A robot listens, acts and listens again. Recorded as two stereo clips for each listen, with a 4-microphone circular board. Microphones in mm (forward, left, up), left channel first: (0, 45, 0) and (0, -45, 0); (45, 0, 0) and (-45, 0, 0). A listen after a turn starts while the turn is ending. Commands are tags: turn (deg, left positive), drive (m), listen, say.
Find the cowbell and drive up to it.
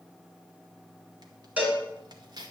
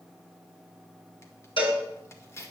<turn deg="-15"/>
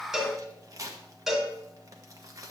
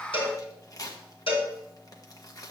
<drive m="1.0"/>
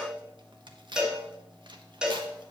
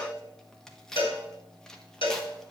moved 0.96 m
<turn deg="-10"/>
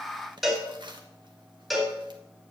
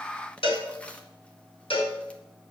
<drive m="1.0"/>
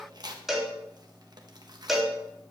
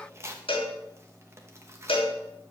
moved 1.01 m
<drive m="1.0"/>
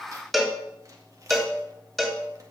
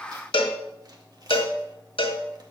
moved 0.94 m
<drive m="1.0"/>
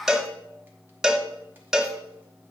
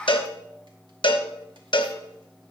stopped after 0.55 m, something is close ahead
<say>Arrived at the cowbell, straight ahead.</say>